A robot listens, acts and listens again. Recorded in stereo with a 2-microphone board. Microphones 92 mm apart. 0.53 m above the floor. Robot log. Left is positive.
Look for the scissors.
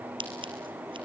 note: The scissors: about 70° right or 110° right.
cmd yaw -70
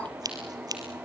note: So it is at 45° right.
cmd yaw -45
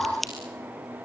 end: Facing the scissors, 2 to 4 m away.